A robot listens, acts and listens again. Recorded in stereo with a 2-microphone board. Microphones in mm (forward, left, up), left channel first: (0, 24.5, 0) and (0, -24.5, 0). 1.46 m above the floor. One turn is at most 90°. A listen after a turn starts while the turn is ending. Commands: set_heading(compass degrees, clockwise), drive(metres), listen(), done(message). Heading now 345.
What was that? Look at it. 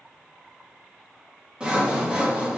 set_heading(5)
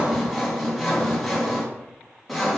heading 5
done("Facing the sawing.")